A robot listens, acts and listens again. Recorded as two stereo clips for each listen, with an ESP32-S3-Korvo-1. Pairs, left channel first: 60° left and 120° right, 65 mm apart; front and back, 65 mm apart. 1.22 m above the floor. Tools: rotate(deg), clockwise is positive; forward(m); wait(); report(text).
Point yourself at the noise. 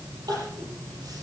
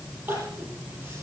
rotate(120)
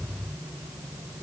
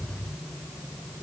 wait()
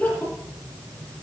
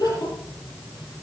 report("Facing the crying, over 4 m away.")